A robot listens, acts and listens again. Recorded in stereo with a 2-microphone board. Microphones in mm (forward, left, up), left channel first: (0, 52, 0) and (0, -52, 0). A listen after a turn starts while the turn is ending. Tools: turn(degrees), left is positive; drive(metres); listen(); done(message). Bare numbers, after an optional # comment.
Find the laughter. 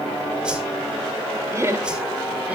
turn(-30)
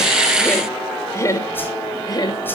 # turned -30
# So it is at 40° left.
turn(40)
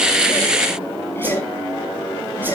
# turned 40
listen()
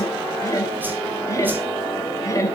# The laughter is now 30° left.
turn(30)
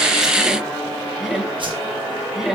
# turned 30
done("Facing the laughter.")